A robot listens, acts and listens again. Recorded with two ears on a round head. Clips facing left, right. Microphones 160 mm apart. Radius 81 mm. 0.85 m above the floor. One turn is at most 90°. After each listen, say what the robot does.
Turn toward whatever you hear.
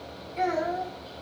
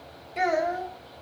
Turn 90° right.
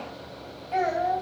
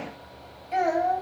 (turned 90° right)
Turn 20° right.
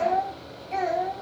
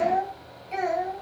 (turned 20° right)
Facing the child speaking.